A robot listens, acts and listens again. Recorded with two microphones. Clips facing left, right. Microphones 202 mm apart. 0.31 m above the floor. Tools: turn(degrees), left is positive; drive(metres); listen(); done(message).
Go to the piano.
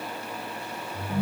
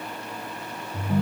listen()
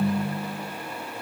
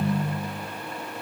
listen()
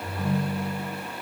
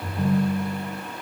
done("I can't make out a piano, only a ringtone.")